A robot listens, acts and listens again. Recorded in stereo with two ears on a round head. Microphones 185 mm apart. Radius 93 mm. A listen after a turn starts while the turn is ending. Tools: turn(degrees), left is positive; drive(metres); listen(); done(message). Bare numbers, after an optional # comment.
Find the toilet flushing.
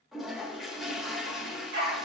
turn(30)
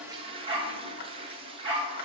# So it is at 30° right.
turn(-30)
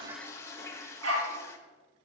# The toilet flushing is now 15° left.
turn(15)
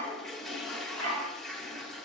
done("Found it: a toilet flushing, straight ahead, under 1 m away.")